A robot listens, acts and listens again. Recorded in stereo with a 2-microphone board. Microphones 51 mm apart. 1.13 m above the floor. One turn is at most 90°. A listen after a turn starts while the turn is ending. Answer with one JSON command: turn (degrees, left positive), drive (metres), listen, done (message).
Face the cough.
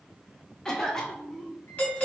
{"turn": 30}
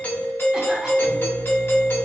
{"listen": true}
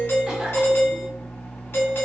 {"listen": true}
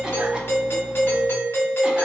{"done": "I heard a cough, but can't make it out now. It was about 20° right or 140° left."}